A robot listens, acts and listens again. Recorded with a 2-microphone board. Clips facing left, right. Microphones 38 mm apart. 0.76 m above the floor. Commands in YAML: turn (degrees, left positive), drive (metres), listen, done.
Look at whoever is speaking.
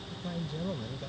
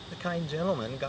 turn: -90
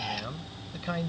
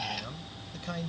turn: 30
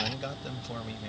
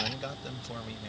turn: 10
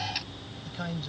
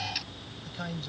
turn: 10
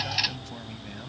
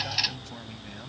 listen: true
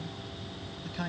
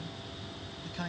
turn: 10
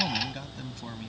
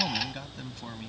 done: "Found it: a man speaking, straight ahead."